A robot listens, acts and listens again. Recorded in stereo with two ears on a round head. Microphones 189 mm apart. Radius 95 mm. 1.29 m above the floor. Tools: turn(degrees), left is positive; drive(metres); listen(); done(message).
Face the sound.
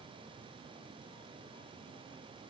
listen()
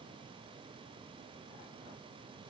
listen()
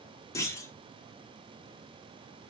turn(degrees=15)
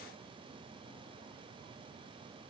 listen()
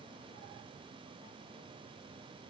done("I heard a clunk, but can't make it out now. It was about straight ahead or 150° left.")